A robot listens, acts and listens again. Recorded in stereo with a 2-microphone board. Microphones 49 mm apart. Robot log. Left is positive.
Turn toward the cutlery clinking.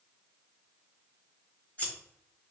cmd idle
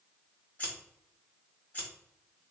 cmd idle
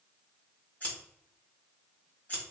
end: I can't make out cutlery clinking to turn to.